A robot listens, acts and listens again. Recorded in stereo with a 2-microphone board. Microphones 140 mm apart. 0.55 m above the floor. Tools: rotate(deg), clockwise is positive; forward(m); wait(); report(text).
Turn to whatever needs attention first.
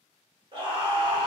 rotate(40)
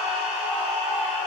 rotate(10)
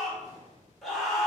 report("Found it: a scream, straight ahead.")